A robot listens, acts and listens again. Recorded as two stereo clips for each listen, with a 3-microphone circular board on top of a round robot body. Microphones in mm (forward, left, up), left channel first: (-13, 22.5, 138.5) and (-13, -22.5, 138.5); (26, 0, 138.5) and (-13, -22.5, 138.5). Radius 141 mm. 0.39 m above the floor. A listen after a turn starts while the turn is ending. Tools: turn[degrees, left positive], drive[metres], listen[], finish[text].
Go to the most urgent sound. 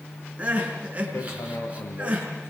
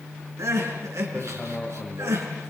Thought: The crying: 150° right.
Action: turn[-150]
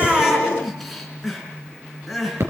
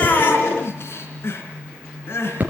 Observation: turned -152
Action: drive[1.0]
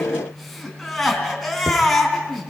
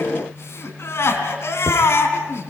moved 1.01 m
Action: drive[1.0]
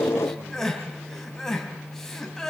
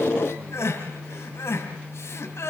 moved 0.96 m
Thought: The crying is now 10° left.
Action: turn[10]
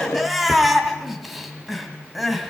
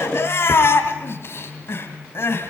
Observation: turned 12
Action: drive[1.0]
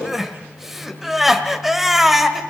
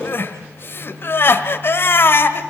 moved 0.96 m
Action: drive[1.0]
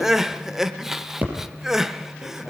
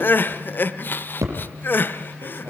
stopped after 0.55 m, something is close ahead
Thought: The crying is now 10° right.
Action: turn[-10]
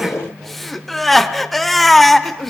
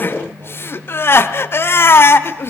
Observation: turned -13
Action: finish[I am next to the crying.]